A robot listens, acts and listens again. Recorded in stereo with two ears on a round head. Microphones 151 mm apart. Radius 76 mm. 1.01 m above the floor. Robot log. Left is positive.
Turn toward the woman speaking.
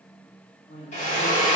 note: The woman speaking: about 50° left or 130° left.
cmd yaw +50
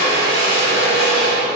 cmd idle
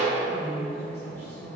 note: So it is at 20° left.
cmd yaw +20
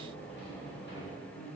cmd idle
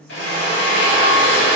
end: Facing the woman speaking, 2 to 4 m away.